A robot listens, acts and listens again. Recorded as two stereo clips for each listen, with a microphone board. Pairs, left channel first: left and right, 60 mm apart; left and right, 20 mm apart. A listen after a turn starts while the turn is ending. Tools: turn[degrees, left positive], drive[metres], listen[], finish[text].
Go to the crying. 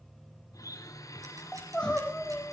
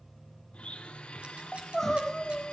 Thought: The crying: about 15° left or 165° left.
Action: turn[15]
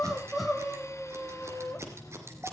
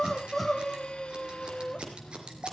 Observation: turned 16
Action: drive[1.0]
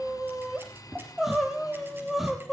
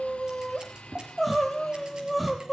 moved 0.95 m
Action: drive[1.0]
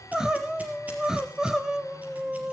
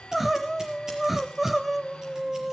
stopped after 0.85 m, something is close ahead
Thought: The crying is now 10° right.
Action: turn[-10]
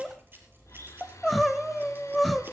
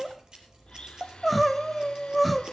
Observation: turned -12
Action: finish[Arrived at the crying, straight ahead.]